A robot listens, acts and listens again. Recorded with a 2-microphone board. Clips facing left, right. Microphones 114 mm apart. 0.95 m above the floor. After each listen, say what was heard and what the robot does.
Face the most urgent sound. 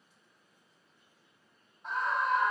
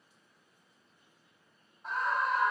Turn 30° left.
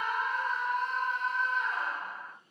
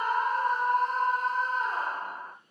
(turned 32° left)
So it is at 35° right. Turn 35° right.
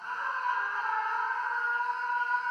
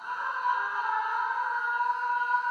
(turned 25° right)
The scream is now 10° right. Turn 10° right.
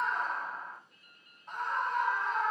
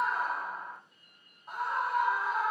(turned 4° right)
Found it: a scream, straight ahead, 1 to 2 m away.